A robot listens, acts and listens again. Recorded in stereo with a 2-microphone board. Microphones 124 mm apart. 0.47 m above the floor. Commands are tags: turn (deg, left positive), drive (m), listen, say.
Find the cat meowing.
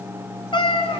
<turn deg="50"/>
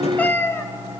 <turn deg="20"/>
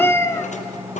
<turn deg="25"/>
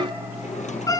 <turn deg="30"/>
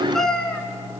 <say>Facing the cat meowing, 2 to 4 m away.</say>